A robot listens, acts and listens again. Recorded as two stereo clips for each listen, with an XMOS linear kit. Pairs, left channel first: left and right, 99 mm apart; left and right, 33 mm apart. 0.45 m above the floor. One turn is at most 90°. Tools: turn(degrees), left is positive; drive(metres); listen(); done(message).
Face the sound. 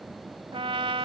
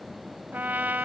turn(degrees=-70)
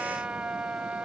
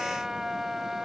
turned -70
turn(degrees=-15)
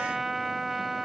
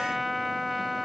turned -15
done("Found it: a trumpet, straight ahead.")